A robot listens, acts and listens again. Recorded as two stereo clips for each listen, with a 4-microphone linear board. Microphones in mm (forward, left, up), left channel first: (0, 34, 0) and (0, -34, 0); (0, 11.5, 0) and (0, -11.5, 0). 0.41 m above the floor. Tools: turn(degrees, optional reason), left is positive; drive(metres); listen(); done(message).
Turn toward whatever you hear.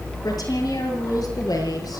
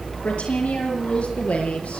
turn(degrees=90)
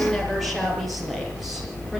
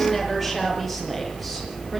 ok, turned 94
done("Facing the woman speaking, over 4 m away.")